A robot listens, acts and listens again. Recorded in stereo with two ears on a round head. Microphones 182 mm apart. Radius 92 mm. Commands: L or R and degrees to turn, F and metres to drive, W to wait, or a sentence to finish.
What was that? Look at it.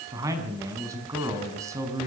R15
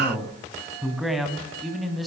L30
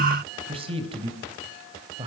R30
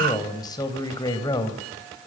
L20
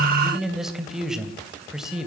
Found it: a man speaking, straight ahead, 2 to 4 m away.